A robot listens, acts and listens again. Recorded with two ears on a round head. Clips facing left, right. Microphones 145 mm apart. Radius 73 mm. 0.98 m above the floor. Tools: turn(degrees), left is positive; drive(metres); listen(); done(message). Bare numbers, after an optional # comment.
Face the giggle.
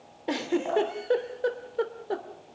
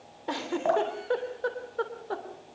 # The giggle: about 25° left or 155° left.
turn(25)
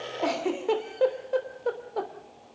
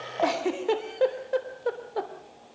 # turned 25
done("Found it: a giggle, straight ahead.")